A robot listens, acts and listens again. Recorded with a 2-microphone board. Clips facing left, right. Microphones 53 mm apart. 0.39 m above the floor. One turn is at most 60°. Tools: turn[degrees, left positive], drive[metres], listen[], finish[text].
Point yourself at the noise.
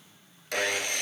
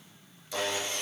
Thought: The sawing: about 60° left or 120° left.
Action: turn[60]
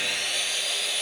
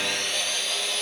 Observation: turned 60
Action: finish[Found it: sawing, straight ahead.]